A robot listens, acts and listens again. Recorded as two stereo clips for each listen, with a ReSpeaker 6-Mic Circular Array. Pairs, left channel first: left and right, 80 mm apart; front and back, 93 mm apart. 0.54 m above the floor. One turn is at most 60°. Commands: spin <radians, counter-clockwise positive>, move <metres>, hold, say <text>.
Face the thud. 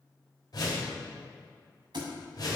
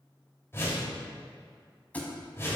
spin -1.05
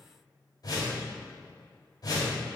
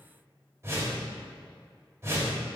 spin -0.17
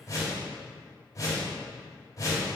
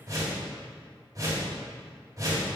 say I heard a thud from this way, but can't make it out now.